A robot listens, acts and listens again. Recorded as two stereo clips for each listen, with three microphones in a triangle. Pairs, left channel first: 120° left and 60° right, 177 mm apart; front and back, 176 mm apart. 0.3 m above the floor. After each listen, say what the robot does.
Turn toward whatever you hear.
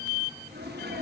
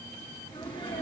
Turn 60° right.
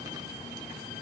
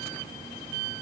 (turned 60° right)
I heard a sneeze from this way, but can't make it out now.